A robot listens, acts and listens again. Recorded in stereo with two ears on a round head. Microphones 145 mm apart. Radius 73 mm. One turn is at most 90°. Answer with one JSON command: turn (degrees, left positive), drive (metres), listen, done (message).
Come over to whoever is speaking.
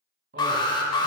{"turn": -70}
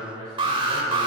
{"turn": -25}
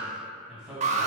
{"drive": 1.0}
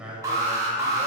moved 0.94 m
{"turn": -10}
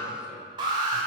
{"listen": true}
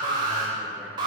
{"listen": true}
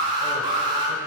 {"done": "Facing where the man speaking came from. I can't hear it now. I did not reach it."}